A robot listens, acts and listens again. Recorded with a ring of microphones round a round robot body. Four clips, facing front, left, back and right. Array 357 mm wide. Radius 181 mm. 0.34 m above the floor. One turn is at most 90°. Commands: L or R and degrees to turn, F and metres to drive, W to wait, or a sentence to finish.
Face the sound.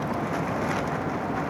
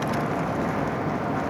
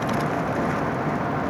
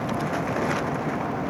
W
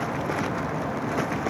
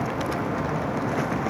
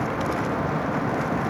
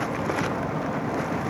W
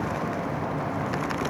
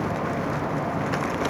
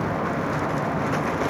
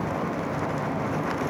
I can't make out anything to turn to.